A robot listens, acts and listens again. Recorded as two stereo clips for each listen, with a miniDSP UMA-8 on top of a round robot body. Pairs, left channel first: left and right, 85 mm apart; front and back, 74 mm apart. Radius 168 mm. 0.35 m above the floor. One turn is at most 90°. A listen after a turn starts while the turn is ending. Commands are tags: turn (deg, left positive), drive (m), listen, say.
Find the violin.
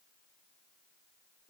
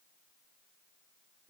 <listen/>
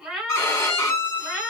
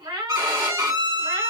<turn deg="90"/>
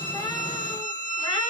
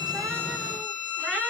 <turn deg="60"/>
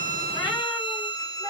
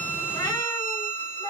<say>Facing the violin, 1 to 2 m away.</say>